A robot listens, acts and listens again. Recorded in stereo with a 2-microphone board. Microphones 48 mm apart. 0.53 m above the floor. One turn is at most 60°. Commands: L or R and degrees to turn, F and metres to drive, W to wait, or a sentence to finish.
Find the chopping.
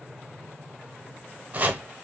R30
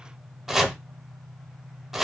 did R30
Found it: chopping, straight ahead.